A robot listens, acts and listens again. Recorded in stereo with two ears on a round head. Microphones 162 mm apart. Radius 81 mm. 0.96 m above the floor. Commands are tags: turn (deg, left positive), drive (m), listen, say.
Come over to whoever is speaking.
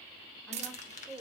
<turn deg="30"/>
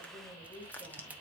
<turn deg="145"/>
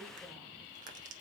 <listen/>
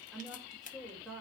<drive m="1.0"/>
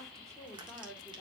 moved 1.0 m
<drive m="1.0"/>
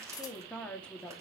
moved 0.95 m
<drive m="1.0"/>
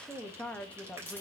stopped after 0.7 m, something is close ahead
<say>Arrived at the woman speaking, straight ahead.</say>